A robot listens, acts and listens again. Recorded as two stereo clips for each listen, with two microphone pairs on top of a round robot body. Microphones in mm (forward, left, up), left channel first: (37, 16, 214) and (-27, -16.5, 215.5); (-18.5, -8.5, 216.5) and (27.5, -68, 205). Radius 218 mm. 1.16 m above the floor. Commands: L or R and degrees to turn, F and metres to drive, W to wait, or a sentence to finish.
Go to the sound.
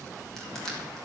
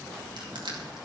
W
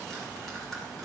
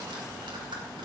W
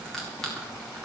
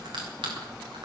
R60
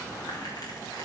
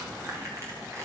W
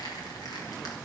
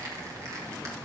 W
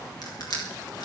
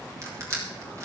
F1.0
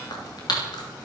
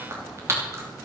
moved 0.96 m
F1.0
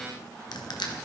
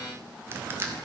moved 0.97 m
F1.0
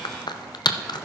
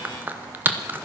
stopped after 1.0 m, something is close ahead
L10
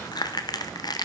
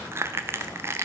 I am next to the crushing.